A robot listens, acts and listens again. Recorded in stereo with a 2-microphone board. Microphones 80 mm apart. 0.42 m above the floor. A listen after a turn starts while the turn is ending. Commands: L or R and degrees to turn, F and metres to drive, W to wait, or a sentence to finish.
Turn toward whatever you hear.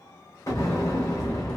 L40
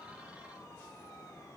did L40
W
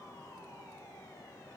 I heard an explosion, but can't make it out now. It was about straight ahead or 100° left.